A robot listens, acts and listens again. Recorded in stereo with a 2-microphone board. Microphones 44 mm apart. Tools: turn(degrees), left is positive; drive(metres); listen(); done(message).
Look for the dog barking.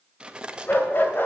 turn(degrees=50)
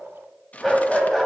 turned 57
turn(degrees=10)
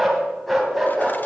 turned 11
done("Found it: a dog barking, straight ahead, 2 to 4 m away.")